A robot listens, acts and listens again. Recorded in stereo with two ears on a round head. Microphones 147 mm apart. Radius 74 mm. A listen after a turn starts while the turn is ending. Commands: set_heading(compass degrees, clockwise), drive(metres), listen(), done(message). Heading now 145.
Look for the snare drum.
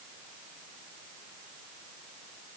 listen()
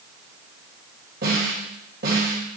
set_heading(215)
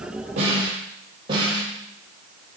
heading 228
set_heading(258)
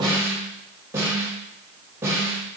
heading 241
set_heading(256)
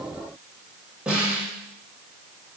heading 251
done("Found it: a snare drum, straight ahead, over 4 m away.")